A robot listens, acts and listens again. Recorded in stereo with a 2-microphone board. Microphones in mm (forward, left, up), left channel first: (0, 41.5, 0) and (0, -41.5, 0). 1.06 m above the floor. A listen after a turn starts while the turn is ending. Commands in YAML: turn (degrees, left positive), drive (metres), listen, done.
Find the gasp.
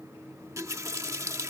listen: true
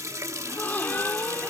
turn: 20
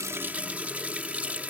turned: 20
listen: true
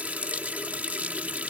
done: "I heard a gasp, but can't make it out now. It was about straight ahead or 140° left."